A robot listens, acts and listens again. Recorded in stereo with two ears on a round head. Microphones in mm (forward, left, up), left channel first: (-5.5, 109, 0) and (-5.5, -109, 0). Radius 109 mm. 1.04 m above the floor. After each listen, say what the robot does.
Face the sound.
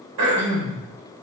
Turn 90° right.
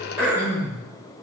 Turn 10° right.
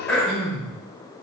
Found it: throat clearing, straight ahead.